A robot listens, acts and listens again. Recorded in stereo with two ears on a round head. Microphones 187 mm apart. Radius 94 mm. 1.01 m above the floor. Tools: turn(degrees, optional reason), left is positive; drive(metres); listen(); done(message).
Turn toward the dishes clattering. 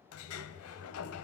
listen()
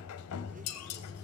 turn(degrees=55, reason="The dishes clattering: about 55° left or 125° left.")
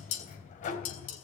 turn(degrees=70, reason="So it is at 70° left.")
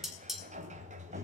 done("Facing the dishes clattering, over 4 m away.")